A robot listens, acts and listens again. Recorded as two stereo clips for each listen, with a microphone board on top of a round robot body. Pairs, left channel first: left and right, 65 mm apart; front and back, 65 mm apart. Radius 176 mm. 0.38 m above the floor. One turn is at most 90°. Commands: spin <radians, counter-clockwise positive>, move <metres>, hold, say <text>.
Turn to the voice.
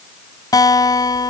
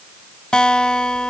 hold
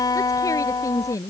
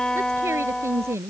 spin 1.57
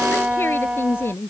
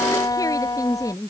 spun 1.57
spin 0.61
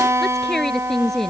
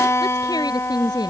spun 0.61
say Found it: a woman speaking, straight ahead.